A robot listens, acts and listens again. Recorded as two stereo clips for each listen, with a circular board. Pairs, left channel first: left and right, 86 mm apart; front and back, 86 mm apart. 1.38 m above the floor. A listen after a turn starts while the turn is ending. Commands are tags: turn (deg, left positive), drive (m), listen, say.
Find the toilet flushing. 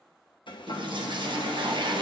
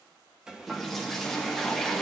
<turn deg="-85"/>
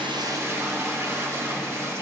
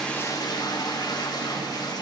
<turn deg="-35"/>
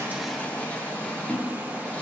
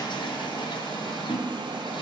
<turn deg="15"/>
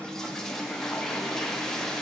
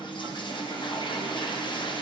<say>Facing the toilet flushing.</say>